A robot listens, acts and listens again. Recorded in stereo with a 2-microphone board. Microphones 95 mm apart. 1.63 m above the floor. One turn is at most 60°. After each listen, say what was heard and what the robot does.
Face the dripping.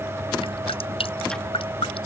Turn 60° left.
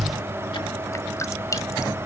So it is at 35° left. Turn 35° left.
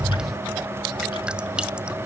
Keep listening.
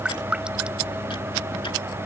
The dripping is now 10° right. Turn 10° right.
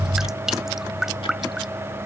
Found it: dripping, straight ahead.